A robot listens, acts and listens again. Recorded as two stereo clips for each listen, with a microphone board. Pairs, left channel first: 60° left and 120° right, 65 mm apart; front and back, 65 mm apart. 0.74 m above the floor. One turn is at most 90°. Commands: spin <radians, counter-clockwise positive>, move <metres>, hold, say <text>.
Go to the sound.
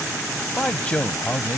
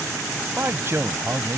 spin 1.57
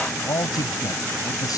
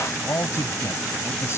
spin 0.79
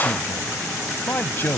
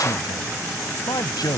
move 1.0
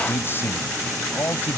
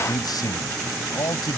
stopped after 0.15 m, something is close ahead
say Something is in my way. I am facing the man speaking but have not reached it.